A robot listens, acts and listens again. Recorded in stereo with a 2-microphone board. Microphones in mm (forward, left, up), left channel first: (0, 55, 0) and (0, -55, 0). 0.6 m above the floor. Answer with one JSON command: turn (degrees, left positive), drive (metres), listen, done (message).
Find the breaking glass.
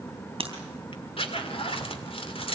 {"turn": -50}
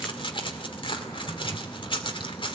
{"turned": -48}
{"listen": true}
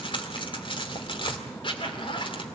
{"done": "I heard breaking glass, but can't make it out now. It was about 5° right or 80° right."}